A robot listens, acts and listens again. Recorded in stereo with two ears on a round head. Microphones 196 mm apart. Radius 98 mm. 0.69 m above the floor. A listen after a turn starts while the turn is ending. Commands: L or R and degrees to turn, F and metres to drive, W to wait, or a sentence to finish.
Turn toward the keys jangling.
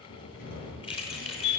L25
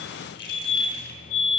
L130
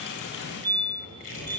W
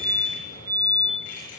W
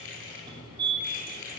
L40
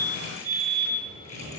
W
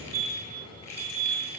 W
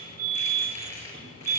L15
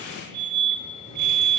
W
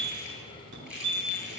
Found it: keys jangling, straight ahead, over 4 m away.